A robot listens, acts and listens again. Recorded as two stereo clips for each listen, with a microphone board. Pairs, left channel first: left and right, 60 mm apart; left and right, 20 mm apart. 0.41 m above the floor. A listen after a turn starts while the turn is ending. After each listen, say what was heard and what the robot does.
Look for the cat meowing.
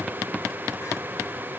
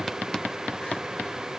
Keep listening.
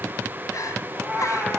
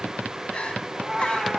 Turn 30° right.
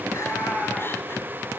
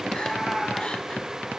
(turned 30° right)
So it is at 20° left. Turn 20° left.
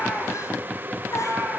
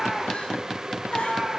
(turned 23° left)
The cat meowing is now 15° right. Turn 15° right.
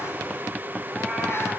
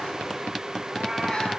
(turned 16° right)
Keep listening.
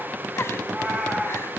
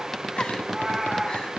Facing the cat meowing.